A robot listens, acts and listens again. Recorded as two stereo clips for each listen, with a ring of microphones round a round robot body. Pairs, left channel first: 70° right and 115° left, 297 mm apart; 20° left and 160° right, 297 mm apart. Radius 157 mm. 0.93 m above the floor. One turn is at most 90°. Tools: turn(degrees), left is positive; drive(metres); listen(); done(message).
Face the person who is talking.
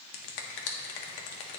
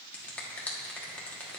listen()
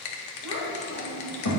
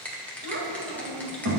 turn(degrees=-90)
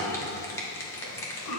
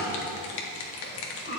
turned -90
turn(degrees=-35)
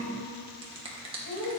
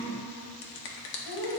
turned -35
turn(degrees=-10)
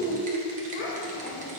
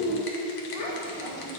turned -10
done("Found it: a child speaking, straight ahead, 2 to 4 m away.")